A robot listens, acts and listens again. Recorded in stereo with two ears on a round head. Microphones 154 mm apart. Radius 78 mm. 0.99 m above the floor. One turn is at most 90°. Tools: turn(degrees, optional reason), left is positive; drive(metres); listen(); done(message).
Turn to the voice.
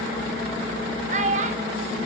turn(degrees=-40, reason="The child speaking: about 40° right or 140° right.")
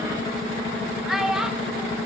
done("Found it: a child speaking, straight ahead.")